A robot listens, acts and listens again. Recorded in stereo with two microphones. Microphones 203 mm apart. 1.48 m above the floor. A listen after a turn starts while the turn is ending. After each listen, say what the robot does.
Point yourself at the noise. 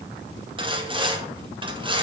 Turn 25° right.
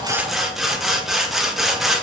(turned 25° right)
Found it: sawing, straight ahead, under 1 m away.